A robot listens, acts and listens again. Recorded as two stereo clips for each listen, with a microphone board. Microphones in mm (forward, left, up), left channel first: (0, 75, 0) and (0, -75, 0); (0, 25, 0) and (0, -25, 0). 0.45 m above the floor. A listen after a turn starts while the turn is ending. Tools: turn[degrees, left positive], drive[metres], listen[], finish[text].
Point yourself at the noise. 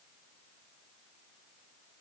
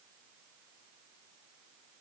Action: listen[]
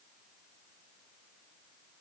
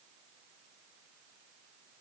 Action: listen[]
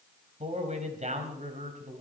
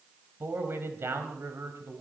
Thought: The man speaking: about 60° right or 120° right.
Action: turn[-60]
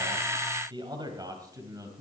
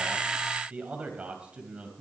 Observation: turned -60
Thought: So it is at 25° right.
Action: turn[-25]
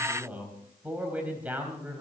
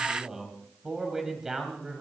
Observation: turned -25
Thought: The man speaking is now 10° right.
Action: turn[-10]
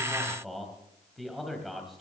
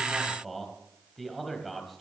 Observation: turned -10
Action: finish[Found it: a man speaking, straight ahead.]